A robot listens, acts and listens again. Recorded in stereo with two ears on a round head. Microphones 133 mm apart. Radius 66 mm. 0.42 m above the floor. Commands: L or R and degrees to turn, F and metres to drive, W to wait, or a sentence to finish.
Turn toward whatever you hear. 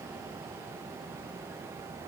W
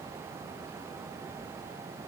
W
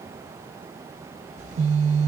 R50
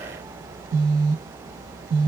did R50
R75
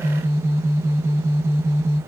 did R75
R20
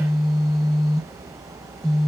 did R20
Found it: a phone buzzing, straight ahead, 1 to 2 m away.